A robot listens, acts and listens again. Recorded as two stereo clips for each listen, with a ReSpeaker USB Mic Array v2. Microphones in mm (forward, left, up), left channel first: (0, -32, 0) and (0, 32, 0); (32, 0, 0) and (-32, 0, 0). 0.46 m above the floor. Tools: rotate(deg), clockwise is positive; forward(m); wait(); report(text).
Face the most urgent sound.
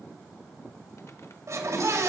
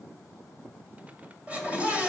rotate(-115)
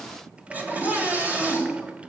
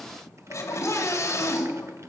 rotate(-30)
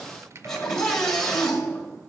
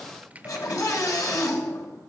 rotate(10)
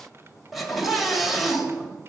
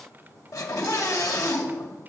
report("Found it: a scream, straight ahead, 2 to 4 m away.")